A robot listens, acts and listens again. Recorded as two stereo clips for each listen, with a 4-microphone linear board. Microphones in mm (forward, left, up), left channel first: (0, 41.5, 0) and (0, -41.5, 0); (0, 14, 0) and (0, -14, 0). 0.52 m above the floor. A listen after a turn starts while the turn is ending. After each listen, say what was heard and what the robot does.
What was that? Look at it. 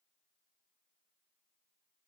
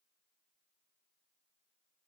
Keep listening.
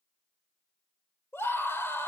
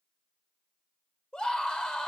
The scream: about 30° left or 150° left. Turn 30° left.
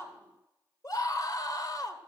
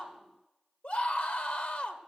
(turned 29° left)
So it is at 115° left. Turn 115° left.
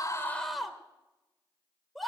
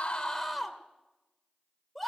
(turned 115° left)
Facing the scream, 1 to 2 m away.